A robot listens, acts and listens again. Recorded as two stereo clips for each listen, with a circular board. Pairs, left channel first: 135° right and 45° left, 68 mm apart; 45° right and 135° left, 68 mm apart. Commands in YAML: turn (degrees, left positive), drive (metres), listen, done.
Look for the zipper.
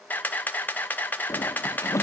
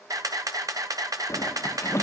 turn: -90
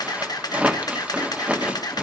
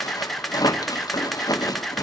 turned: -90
turn: -25
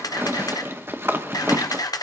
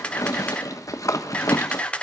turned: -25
turn: -10
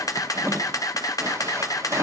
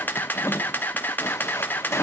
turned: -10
done: "Facing the zipper, 1 to 2 m away."